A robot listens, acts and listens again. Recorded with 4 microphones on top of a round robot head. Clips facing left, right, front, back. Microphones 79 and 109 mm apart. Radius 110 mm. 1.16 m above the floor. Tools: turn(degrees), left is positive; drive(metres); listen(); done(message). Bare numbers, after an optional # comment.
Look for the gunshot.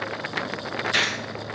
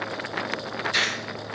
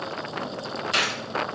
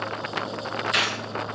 # The gunshot: 55° left.
turn(55)
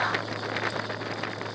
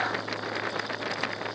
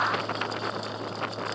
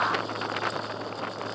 done("I heard a gunshot from this way, but can't make it out now.")